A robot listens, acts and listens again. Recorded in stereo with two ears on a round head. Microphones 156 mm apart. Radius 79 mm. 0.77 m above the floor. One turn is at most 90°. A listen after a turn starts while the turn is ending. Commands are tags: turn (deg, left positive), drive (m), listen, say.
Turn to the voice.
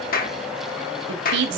<turn deg="-75"/>
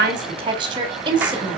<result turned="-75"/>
<turn deg="-30"/>
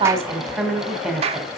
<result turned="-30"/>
<say>Found it: a woman speaking, straight ahead, 2 to 4 m away.</say>